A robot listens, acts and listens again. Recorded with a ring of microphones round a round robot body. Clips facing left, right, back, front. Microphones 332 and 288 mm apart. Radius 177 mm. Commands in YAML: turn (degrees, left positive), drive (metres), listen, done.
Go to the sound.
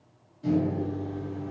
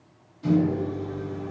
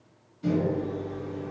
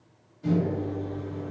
turn: -145
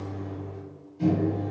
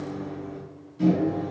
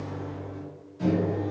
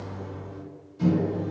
turn: -40
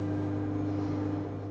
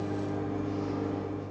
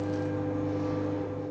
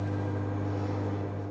turn: 10
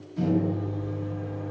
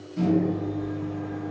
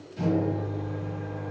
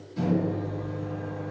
drive: 1.0
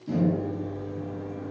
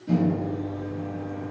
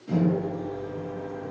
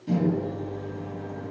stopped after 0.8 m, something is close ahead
turn: 10
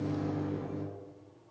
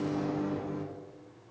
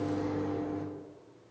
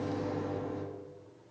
done: "I am next to the microwave."